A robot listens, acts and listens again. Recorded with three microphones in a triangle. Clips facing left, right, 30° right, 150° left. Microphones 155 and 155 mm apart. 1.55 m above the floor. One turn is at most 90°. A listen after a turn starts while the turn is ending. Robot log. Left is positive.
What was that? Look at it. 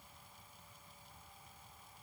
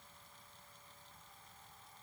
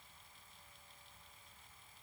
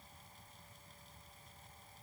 cmd idle
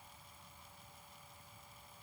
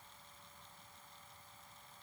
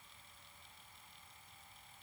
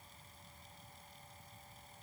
cmd idle
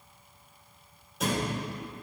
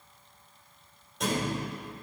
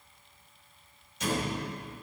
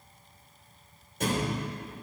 note: The thud: 175° left.
cmd yaw +90
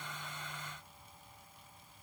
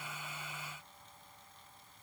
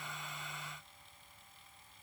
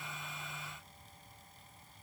note: Nothing new. It was at 85° left.
cmd yaw +85
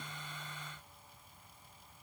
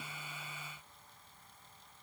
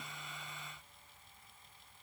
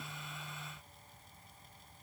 end: I heard a thud from this way, but can't make it out now.